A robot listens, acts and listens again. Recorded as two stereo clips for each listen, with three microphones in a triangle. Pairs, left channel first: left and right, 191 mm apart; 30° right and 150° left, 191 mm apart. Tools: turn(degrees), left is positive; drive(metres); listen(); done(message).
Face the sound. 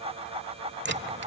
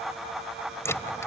turn(degrees=-105)
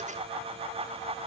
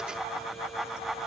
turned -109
done("I heard a dropped coin from this way, but can't make it out now.")